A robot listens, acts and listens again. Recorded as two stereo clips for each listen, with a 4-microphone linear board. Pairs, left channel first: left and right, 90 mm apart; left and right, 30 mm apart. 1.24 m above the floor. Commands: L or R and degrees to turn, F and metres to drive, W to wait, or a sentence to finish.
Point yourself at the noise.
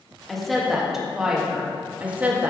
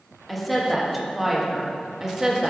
R20
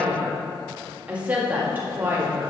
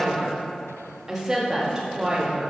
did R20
R20
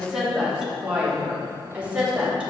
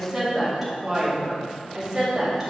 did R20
R30
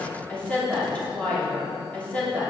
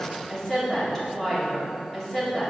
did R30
L15
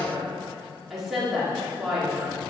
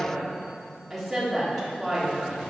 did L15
Facing the woman speaking, 2 to 4 m away.